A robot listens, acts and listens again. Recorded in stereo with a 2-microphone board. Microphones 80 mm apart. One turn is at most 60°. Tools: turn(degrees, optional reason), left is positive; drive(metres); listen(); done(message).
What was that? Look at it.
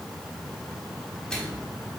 turn(degrees=30)
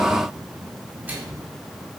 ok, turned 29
turn(degrees=-20, reason="So it is at 20° right.")
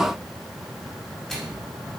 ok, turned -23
done("Facing the microwave.")